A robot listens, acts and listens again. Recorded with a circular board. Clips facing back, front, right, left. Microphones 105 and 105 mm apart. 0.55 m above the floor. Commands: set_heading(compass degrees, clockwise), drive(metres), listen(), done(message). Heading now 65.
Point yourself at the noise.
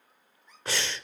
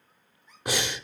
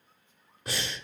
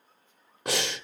set_heading(350)
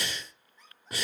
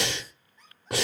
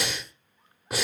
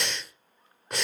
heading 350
done("Facing the breathing.")